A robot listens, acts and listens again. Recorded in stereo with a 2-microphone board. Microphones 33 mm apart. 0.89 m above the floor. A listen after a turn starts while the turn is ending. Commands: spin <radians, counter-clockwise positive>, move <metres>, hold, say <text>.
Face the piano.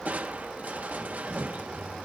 hold
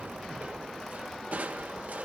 hold
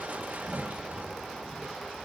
say I can't make out a piano, only crushing.